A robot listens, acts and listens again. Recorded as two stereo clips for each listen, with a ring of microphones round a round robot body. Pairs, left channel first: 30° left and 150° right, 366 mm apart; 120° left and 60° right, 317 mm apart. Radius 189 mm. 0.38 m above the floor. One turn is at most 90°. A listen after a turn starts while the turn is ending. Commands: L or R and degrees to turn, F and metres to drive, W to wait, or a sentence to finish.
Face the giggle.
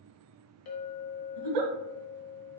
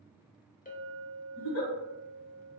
L90
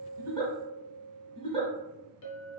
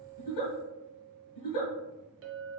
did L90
L90
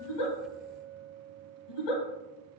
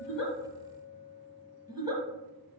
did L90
L20
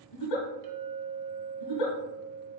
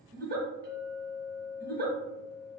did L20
Facing the giggle, 1 to 2 m away.